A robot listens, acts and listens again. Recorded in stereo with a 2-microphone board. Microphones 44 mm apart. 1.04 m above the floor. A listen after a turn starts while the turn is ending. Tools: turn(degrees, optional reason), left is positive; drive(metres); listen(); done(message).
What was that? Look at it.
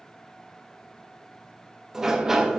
turn(degrees=-30)
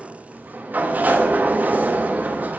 turn(degrees=-140, reason="So it is at 140° right.")
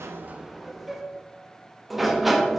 done("Found it: a sliding door, straight ahead.")